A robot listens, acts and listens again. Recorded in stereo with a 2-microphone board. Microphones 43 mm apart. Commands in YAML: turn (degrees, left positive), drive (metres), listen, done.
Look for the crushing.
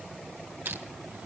turn: -65
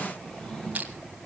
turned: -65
turn: -40
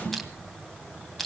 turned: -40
done: "Found it: crushing, straight ahead, 2 to 4 m away."